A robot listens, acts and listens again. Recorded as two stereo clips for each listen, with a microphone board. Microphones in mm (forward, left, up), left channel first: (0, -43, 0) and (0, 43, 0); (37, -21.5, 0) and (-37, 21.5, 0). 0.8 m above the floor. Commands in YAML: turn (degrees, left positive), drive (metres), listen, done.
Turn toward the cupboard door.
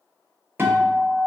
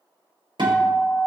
listen: true
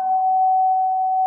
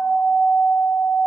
listen: true
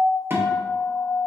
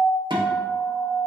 done: "I can't make out a cupboard door, only a guitar."